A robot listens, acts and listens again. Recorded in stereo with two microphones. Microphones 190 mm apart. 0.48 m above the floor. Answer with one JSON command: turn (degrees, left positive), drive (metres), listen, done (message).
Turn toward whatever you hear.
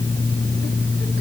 {"listen": true}
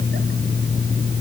{"listen": true}
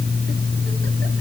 {"done": "I can't make out anything."}